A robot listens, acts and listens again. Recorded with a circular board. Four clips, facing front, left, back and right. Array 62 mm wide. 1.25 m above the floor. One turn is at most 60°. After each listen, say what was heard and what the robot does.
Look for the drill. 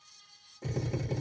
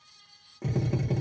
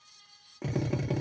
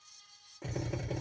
The drill: 170° left. Turn 60° left.
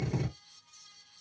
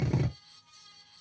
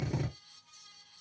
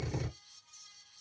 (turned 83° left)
The drill is now 85° left. Turn 60° left.
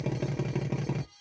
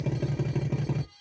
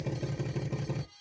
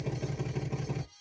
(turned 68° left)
The drill is now 20° left. Turn 20° left.
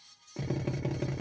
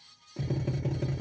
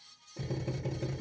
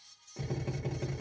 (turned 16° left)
Facing the drill.